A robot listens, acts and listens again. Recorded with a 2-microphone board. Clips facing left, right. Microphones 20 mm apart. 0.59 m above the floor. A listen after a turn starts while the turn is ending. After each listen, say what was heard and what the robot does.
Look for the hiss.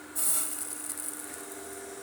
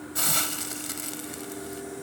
The hiss: about 70° right or 110° right. Turn 70° right.
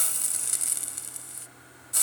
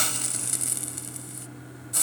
Found it: a hiss, straight ahead.